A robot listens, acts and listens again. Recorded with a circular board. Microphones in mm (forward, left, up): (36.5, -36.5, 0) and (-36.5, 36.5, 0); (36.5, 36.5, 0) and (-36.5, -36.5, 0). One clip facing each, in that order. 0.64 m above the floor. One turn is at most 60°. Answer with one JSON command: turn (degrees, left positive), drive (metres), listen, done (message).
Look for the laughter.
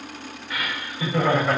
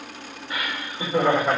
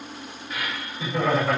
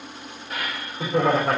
{"turn": -60}
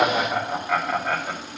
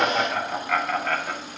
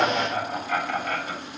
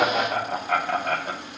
{"turn": -60}
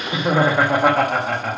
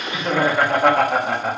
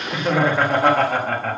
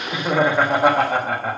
{"turn": 60}
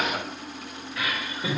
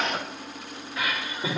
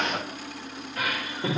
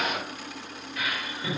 {"turn": 60}
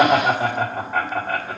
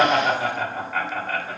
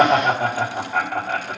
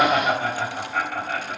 {"turn": 10}
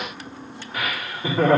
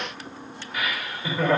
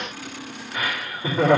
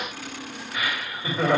{"done": "Facing the laughter, 1 to 2 m away."}